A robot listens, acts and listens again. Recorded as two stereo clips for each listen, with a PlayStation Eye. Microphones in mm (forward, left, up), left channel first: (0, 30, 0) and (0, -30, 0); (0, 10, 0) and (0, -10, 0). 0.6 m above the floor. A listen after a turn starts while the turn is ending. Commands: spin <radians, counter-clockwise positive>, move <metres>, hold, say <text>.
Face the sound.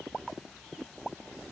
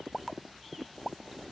hold
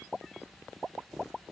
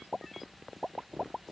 hold
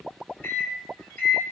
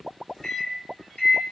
spin 0.61
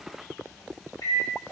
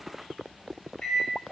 spin 1.83
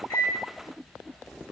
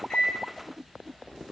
hold
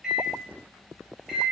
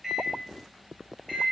say Facing the microwave.